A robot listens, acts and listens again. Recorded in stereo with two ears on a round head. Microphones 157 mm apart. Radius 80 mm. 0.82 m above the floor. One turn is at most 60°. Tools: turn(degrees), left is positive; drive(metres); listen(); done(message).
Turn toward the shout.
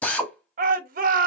turn(degrees=-50)
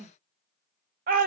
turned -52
turn(degrees=-60)
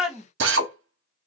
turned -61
done("Found it: a shout, straight ahead.")